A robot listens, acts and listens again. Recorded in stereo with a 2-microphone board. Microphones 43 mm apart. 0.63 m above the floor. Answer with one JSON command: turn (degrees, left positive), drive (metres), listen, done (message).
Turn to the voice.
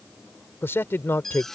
{"turn": 70}
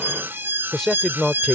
{"turn": 10}
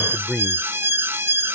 {"done": "Facing the man speaking."}